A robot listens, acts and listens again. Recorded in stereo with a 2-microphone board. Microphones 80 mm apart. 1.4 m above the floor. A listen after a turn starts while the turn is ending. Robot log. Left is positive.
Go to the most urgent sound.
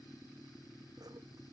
cmd idle
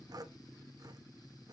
cmd idle
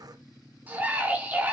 note: The scream: about 20° right or 160° right.
cmd yaw -20
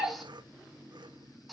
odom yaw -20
cmd fwd 1.0
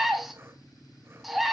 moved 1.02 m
cmd fwd 1.0
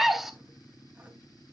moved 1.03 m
cmd fwd 1.0
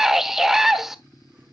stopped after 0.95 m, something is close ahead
end: Arrived at the scream, straight ahead.